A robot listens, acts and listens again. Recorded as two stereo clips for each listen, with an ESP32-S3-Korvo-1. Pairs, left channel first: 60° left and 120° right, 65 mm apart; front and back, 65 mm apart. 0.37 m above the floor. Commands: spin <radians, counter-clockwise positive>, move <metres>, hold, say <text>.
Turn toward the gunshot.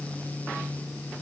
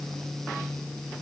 hold
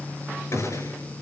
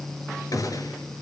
spin 0.35
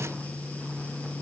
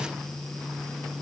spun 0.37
say I heard a gunshot from this way, but can't make it out now.